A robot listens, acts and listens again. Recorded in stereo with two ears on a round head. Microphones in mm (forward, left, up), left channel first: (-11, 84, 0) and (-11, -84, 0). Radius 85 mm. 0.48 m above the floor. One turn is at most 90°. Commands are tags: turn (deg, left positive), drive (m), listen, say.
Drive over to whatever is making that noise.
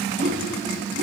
<turn deg="-40"/>
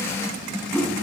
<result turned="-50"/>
<turn deg="10"/>
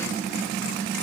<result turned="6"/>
<listen/>
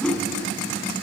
<drive m="1.0"/>
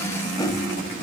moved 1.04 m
<turn deg="20"/>
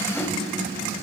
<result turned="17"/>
<listen/>
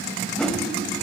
<drive m="1.0"/>
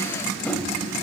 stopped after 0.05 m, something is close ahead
<turn deg="10"/>
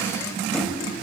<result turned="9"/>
<listen/>
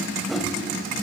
<say>Arrived at the whoosh, straight ahead.</say>